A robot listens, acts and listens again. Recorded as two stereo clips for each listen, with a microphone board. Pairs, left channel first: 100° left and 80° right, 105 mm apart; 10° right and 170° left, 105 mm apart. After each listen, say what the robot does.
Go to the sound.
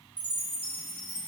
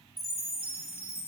Drive 1.0 m forward.
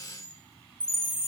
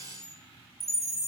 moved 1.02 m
Turn 15° right.
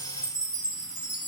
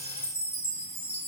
Drive 1.0 m forward.
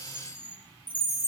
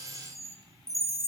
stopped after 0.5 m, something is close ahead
Arrived at the chime, straight ahead.